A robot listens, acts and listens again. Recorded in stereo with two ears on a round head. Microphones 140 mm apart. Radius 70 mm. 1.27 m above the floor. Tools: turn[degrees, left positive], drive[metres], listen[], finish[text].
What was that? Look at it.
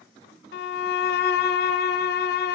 Thought: The violin: about 70° left or 110° left.
Action: turn[70]
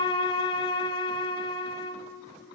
Thought: So it is at 30° left.
Action: turn[30]
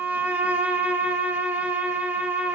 Thought: The violin is now 10° right.
Action: turn[-10]
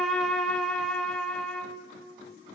Action: finish[Found it: a violin, straight ahead, 1 to 2 m away.]